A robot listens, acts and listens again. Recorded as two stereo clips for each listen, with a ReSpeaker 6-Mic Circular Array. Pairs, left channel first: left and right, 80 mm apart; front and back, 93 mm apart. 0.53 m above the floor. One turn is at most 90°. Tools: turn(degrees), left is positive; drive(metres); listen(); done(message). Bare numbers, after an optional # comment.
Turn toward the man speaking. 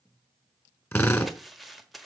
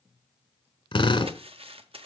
listen()
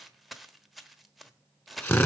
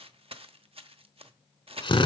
listen()
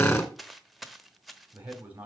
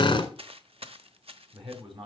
# The man speaking: 165° right.
turn(-90)
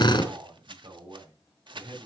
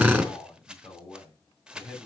# The man speaking is now 90° right.
turn(-90)
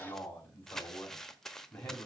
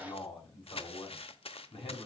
# The man speaking is now 15° left.
turn(15)
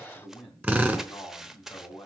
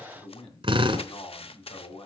done("Found it: a man speaking, straight ahead.")